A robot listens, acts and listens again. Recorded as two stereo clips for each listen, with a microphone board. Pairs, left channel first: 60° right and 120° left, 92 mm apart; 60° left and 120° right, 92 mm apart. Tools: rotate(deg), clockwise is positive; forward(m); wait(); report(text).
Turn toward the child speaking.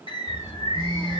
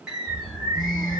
report("Facing the child speaking.")